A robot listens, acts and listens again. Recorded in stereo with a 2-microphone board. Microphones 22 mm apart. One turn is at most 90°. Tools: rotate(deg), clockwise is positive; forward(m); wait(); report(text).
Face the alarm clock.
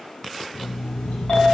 rotate(-70)
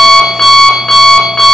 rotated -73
rotate(-40)
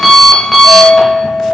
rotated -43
report("Facing the alarm clock, under 1 m away.")